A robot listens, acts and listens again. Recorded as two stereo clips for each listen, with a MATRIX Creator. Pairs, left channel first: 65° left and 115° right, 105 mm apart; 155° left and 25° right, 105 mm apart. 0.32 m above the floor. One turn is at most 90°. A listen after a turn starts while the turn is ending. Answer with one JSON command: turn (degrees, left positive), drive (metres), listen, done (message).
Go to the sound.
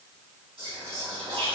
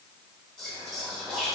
{"turn": -90}
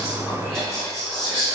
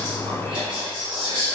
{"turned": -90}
{"turn": -15}
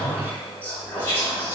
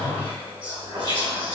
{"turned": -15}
{"drive": 1.0}
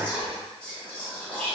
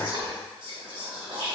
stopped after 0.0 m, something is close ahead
{"turn": -10}
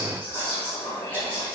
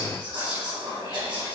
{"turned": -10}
{"done": "Something is in my way. I am facing the whispering but have not reached it."}